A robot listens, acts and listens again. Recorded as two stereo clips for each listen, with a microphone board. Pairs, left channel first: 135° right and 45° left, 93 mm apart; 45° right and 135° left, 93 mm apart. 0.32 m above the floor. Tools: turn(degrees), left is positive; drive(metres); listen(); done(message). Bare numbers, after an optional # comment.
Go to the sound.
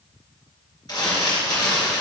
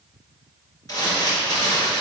# The crumpling: 95° right.
turn(-95)
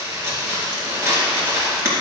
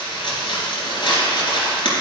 # The crumpling is now 15° right.
turn(-15)
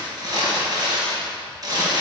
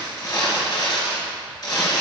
drive(1.0)
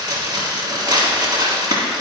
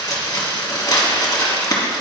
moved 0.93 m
drive(1.0)
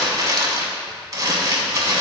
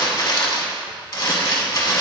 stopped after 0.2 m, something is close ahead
done("Arrived at the crumpling, straight ahead.")